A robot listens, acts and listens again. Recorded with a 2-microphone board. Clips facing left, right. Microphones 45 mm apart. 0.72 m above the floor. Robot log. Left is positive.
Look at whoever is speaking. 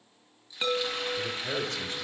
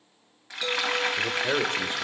note: The man speaking: about 40° right or 140° right.
cmd yaw -40
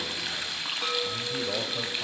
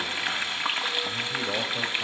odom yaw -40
end: Found it: a man speaking, straight ahead.